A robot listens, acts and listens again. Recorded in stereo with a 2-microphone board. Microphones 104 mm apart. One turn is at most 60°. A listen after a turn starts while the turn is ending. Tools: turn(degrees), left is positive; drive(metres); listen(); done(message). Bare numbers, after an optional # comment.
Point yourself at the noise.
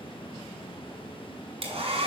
# The hair dryer: about 75° right or 105° right.
turn(-60)
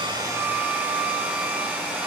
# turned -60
# So it is at 15° right.
turn(-15)
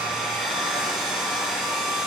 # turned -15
done("Facing the hair dryer, 2 to 4 m away.")